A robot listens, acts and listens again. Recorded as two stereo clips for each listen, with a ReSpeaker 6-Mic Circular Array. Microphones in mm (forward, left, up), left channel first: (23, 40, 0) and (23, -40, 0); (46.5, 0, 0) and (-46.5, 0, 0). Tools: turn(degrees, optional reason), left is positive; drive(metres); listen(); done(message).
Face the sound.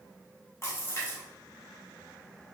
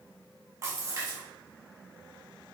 turn(degrees=135, reason="The splash: 135° left.")
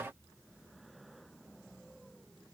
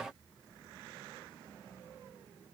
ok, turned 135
done("I heard a splash from this way, but can't make it out now.")